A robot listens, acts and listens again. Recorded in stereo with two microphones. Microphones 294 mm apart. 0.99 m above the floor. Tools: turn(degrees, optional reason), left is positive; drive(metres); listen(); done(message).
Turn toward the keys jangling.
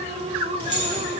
turn(degrees=-65, reason="The keys jangling: about 65° right or 115° right.")
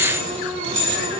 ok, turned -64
turn(degrees=-40, reason="So it is at 40° right.")
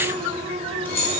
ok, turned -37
turn(degrees=10, reason="The keys jangling is now 10° left.")
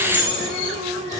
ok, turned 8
done("Facing the keys jangling, 2 to 4 m away.")